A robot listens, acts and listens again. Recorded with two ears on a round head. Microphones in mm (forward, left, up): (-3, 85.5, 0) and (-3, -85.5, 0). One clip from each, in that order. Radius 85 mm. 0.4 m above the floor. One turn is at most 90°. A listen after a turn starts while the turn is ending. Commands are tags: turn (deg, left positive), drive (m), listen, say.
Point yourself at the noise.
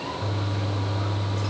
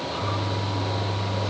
<turn deg="90"/>
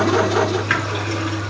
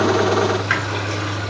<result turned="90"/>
<say>Facing the toilet flushing, 2 to 4 m away.</say>